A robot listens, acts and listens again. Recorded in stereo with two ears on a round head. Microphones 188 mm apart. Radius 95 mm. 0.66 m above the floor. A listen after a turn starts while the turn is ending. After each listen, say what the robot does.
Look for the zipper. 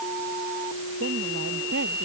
Keep listening.
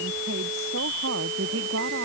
Keep listening.
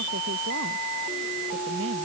I can't make out a zipper, only a woman speaking.